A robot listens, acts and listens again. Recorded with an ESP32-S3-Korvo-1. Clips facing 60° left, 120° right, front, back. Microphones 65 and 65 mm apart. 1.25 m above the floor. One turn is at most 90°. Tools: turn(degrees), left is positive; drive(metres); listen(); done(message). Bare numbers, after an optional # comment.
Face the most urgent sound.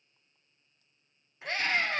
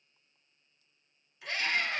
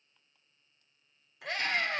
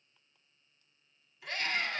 done("Facing the scream, over 4 m away.")